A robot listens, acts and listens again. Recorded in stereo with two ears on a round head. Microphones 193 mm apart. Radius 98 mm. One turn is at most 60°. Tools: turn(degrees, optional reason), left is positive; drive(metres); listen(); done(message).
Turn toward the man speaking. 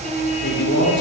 turn(degrees=55, reason="The man speaking: about 55° left or 125° left.")
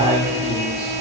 turn(degrees=15, reason="So it is at 15° left.")
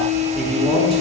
listen()
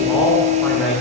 done("Found it: a man speaking, straight ahead.")